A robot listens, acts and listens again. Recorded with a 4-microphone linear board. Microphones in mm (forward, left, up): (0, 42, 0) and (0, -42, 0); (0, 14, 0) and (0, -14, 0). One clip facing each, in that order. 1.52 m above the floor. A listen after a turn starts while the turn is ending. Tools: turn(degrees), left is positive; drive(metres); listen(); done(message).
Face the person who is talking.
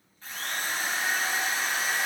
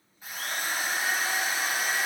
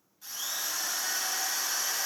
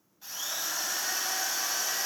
listen()
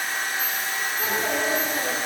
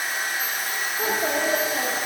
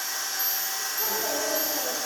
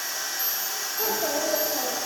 turn(degrees=-40)
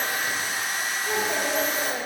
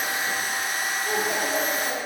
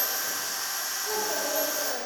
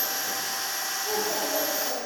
done("Found it: a child speaking, straight ahead, 2 to 4 m away.")